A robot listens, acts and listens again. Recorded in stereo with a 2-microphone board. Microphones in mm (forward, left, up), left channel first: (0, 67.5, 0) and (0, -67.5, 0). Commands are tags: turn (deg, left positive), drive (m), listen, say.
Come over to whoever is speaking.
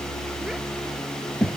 <turn deg="-30"/>
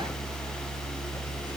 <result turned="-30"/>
<listen/>
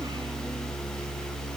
<listen/>
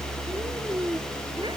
<turn deg="-145"/>
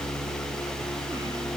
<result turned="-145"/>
<listen/>
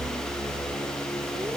<listen/>
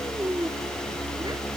<turn deg="-30"/>
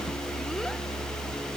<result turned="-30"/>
<listen/>
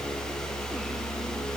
<listen/>
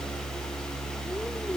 <say>I heard a child speaking from this way, but can't make it out now. I did not reach it.</say>